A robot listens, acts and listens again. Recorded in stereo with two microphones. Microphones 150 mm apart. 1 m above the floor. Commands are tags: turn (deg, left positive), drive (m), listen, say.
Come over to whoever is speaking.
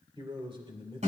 <turn deg="-35"/>
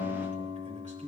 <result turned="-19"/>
<listen/>
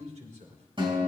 <turn deg="-125"/>
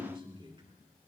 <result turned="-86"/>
<turn deg="-35"/>
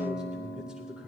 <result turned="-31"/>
<drive m="1.0"/>
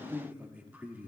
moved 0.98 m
<turn deg="-10"/>
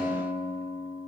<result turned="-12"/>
<listen/>
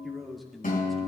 <drive m="1.0"/>
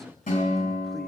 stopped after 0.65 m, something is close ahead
<listen/>
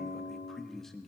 <say>Arrived at the man speaking, straight ahead.</say>